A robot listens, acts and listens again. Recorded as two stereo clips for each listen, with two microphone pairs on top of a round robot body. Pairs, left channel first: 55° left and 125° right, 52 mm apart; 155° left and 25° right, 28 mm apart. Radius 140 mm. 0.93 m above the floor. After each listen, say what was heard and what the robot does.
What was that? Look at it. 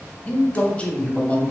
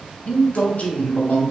The man speaking: 125° left. Turn 125° left.
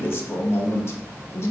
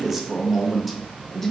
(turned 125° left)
The man speaking is now 60° left. Turn 60° left.
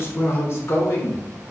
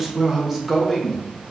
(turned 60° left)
The man speaking is now 45° left. Turn 45° left.
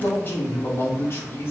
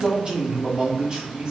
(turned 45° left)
The man speaking is now 15° left. Turn 15° left.
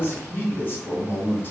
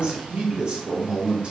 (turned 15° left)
Found it: a man speaking, straight ahead.